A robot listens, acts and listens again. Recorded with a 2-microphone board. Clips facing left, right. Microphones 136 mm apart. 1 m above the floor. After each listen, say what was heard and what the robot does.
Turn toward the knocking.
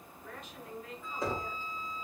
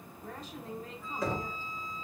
The knocking: about 25° left or 155° left. Turn 25° left.
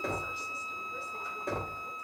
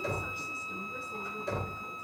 So it is at 130° left. Turn 130° left.
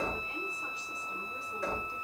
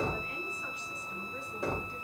The knocking is now 20° right. Turn 20° right.
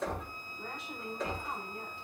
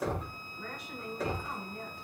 The knocking is now 10° right. Turn 10° right.
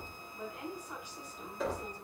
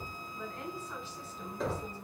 Found it: knocking, straight ahead, 1 to 2 m away.